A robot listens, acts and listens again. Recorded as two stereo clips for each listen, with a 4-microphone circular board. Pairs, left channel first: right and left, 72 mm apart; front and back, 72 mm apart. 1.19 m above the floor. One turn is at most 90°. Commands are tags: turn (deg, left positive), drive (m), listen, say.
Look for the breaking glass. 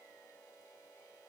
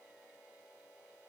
<listen/>
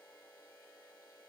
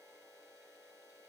<listen/>
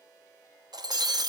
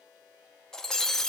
<turn deg="80"/>
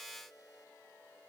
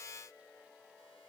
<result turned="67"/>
<turn deg="15"/>
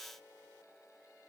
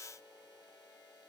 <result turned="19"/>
<say>I heard breaking glass from this way, but can't make it out now.</say>